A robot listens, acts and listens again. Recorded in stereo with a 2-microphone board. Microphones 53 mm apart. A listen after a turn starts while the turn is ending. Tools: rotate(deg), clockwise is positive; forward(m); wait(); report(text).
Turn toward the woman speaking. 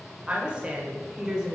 rotate(30)
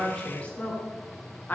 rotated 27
rotate(-35)
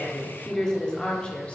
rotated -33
rotate(-25)
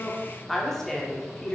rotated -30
rotate(-20)
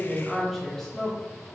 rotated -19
rotate(-10)
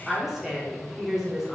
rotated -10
report("Facing the woman speaking.")